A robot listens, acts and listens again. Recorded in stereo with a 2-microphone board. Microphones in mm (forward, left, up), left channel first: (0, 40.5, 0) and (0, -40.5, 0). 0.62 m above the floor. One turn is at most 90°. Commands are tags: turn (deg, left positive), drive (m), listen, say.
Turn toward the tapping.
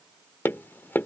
<turn deg="25"/>
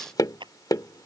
<turn deg="90"/>
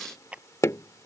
<turn deg="40"/>
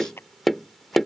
<say>Facing the tapping.</say>